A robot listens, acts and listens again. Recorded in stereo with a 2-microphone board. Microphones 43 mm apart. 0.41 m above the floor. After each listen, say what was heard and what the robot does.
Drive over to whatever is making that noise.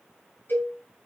The cowbell: about 55° left or 125° left. Turn 55° left.
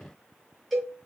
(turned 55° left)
Drive 1.0 m forward.
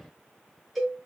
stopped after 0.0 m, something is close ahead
Something is in my way. I am facing the cowbell but have not reached it.